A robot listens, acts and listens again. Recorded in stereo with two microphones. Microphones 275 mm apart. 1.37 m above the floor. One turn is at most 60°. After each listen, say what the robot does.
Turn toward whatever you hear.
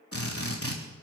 Turn 55° left.
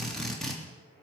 Facing the drill, 2 to 4 m away.